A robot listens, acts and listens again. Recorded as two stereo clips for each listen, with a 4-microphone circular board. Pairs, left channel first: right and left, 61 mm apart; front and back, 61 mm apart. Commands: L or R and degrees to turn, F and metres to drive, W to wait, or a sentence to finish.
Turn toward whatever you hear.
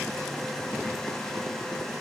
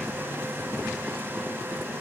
W
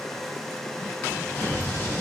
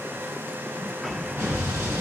R135
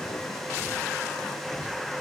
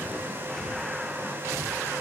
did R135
Facing where the explosion came from. I can't hear it now.